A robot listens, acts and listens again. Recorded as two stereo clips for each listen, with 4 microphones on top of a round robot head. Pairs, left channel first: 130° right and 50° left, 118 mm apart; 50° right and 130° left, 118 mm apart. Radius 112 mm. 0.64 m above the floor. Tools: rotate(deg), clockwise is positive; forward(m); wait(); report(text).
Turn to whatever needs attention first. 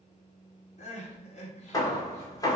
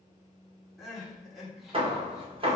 rotate(140)
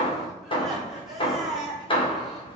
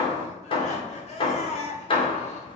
rotate(40)
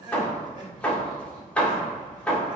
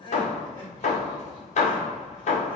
report("Facing the crying, 2 to 4 m away.")